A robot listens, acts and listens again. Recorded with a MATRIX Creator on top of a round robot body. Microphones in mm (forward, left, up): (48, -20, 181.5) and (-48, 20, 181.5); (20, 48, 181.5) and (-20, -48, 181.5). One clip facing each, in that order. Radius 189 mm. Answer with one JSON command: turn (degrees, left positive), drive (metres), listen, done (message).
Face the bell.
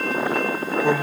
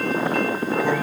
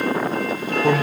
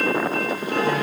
{"listen": true}
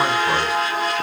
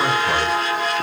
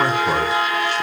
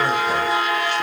{"listen": true}
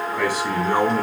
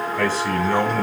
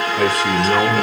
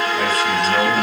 {"done": "I can't make out a bell, only a man speaking."}